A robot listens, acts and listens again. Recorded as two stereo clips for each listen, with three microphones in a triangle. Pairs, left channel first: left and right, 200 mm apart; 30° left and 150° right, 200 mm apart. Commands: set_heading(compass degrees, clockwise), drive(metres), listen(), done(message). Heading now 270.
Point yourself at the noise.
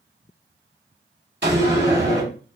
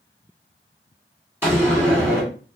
set_heading(340)
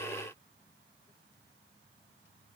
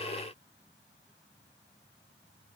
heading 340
done("Facing where the door slam came from. I can't hear it now.")